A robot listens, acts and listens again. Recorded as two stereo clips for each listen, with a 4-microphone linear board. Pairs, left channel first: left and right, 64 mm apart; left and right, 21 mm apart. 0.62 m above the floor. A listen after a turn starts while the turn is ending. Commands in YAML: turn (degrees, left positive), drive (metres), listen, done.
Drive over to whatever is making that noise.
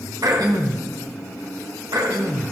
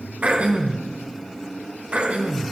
turn: -90
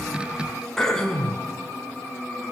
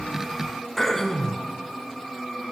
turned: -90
drive: 1.0
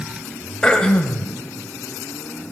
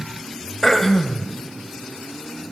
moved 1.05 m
turn: 10
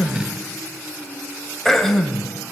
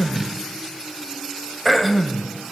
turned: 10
drive: 1.0
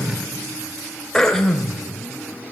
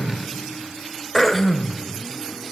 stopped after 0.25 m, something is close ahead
done: "Arrived at the throat clearing, straight ahead."